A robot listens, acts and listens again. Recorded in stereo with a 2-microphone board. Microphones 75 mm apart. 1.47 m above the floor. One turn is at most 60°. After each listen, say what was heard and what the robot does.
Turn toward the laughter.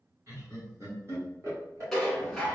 The laughter: about 40° right or 140° right. Turn 40° right.
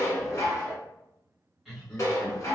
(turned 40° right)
Found it: laughter, straight ahead.